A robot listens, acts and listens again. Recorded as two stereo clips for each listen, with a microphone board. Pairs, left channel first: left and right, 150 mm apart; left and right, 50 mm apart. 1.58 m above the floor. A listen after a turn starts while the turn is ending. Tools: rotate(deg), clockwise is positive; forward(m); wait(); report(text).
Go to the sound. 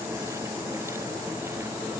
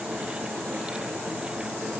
wait()
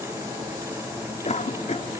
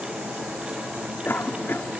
rotate(-50)
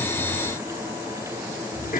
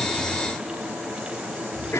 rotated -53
rotate(-80)
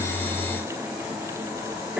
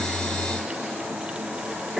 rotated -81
forward(1.0)
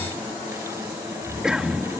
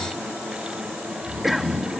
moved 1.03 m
forward(1.0)
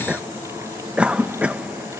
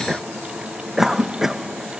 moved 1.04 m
rotate(10)
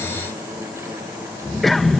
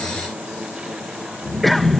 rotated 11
forward(1.0)
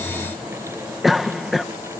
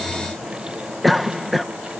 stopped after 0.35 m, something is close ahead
report("Arrived at the cough, straight ahead.")